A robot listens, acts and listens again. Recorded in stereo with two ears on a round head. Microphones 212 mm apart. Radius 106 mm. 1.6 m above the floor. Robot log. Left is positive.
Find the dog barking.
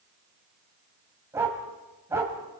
cmd yaw -30
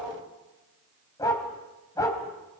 note: So it is at 15° left.
cmd yaw +15
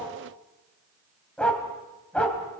end: Facing the dog barking.